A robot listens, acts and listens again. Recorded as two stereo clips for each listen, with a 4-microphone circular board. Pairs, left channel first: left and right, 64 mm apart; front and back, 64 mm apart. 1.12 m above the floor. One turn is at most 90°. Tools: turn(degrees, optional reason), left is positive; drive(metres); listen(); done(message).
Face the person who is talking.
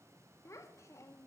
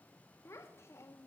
turn(degrees=45, reason="The child speaking: 45° left.")
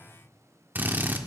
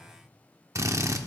listen()
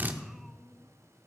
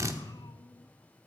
listen()
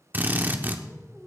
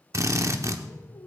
done("Facing the child speaking.")